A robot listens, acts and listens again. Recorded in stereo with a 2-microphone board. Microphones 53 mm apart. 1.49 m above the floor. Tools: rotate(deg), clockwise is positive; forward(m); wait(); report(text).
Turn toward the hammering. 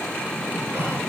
wait()
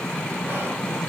wait()
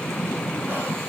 report("I can't make out hammering.")